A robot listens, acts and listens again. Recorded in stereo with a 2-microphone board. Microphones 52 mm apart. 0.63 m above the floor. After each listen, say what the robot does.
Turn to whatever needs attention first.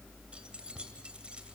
Keep listening.
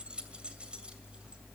Keep listening.
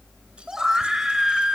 Turn 30° right.
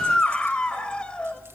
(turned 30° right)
Turn 20° left.
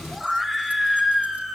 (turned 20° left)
Facing the scream.